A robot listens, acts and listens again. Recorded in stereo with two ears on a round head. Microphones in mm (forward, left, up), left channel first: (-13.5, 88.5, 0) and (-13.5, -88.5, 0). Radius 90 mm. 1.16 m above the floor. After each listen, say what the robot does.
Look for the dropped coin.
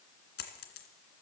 Turn 55° left.
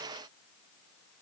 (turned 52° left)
Keep listening.
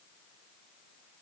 I heard a dropped coin, but can't make it out now. It was about 5° left or 70° left.